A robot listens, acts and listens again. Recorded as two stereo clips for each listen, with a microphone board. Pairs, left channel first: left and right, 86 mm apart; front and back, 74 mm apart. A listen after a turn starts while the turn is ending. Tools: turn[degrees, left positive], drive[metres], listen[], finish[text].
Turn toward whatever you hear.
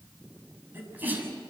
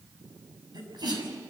Thought: The sneeze: 160° right.
Action: turn[-160]
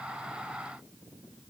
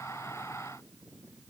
Action: finish[Facing where the sneeze came from. I can't hear it now.]